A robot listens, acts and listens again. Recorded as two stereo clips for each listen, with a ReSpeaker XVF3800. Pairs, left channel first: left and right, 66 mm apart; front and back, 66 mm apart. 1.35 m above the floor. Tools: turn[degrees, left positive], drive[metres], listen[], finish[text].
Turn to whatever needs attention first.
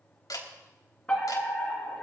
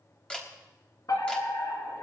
Thought: The fire alarm: 15° left.
Action: turn[15]
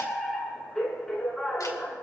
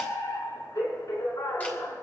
Action: finish[Found it: a fire alarm, straight ahead, over 4 m away.]